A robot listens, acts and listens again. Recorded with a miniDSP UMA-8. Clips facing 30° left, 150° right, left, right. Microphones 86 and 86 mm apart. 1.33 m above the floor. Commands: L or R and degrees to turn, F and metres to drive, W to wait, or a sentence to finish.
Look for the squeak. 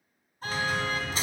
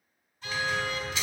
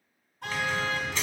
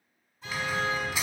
R10
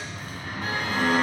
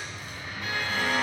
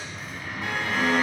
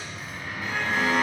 Facing the squeak, 2 to 4 m away.